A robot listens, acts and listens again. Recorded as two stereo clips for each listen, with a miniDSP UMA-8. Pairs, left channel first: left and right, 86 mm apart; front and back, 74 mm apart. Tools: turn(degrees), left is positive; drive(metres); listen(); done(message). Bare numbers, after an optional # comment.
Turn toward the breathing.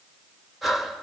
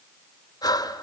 done("Facing the breathing, 2 to 4 m away.")